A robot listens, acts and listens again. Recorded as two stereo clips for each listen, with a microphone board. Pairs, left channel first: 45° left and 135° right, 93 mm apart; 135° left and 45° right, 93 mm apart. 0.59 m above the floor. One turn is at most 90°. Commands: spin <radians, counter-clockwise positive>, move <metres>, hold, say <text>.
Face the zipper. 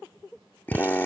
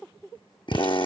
hold
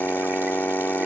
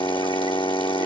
hold
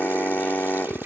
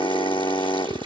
say I can't make out a zipper, only a drill.